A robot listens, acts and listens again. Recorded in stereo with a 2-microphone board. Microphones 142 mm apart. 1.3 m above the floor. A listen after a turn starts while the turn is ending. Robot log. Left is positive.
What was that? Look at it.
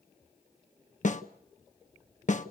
note: The snare drum: about 55° left or 125° left.
cmd yaw +55
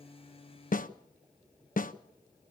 note: So it is at 65° left.
cmd yaw +65
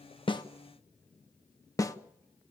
note: The snare drum is now 20° left.
cmd yaw +20
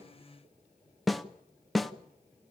end: Found it: a snare drum, straight ahead, 1 to 2 m away.